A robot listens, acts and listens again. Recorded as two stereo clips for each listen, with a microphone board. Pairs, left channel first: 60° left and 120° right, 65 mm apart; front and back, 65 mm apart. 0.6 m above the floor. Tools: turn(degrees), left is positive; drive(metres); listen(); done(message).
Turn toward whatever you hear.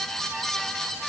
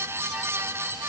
listen()
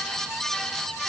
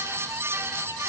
listen()
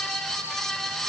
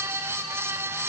done("I can't make out anything to turn to.")